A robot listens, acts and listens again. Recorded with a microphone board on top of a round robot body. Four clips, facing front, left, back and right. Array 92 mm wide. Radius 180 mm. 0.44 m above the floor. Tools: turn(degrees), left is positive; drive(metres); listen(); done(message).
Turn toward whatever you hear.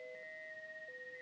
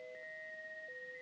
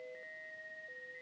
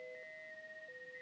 listen()
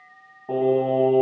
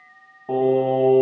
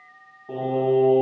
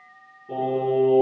turn(degrees=60)
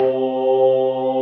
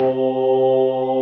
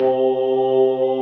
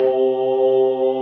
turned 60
done("Found it: singing, straight ahead, over 4 m away.")